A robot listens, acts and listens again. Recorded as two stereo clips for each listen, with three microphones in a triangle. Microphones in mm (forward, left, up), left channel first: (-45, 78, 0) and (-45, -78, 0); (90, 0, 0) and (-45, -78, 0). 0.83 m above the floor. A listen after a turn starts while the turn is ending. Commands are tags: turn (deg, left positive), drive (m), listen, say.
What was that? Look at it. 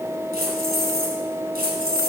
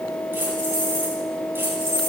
<turn deg="-75"/>
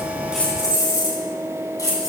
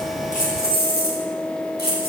<turn deg="20"/>
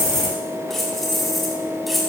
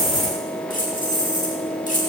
<say>Facing the keys jangling, 2 to 4 m away.</say>